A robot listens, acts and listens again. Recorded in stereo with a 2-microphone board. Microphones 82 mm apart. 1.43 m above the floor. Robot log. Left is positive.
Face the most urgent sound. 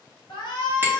note: The shout: about 65° left or 115° left.
cmd yaw +65
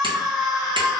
end: Found it: a shout, straight ahead.